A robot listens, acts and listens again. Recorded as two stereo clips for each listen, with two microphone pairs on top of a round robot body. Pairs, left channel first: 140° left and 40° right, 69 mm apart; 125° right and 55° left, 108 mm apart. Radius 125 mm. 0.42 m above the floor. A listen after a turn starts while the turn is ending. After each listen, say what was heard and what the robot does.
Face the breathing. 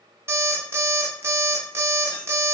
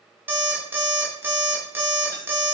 Keep listening.
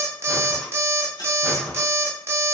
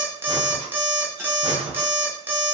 The breathing: 50° left. Turn 50° left.
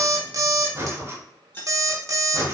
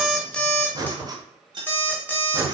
The breathing is now 10° left. Turn 10° left.
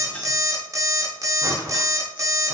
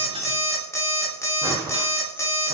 Facing the breathing, under 1 m away.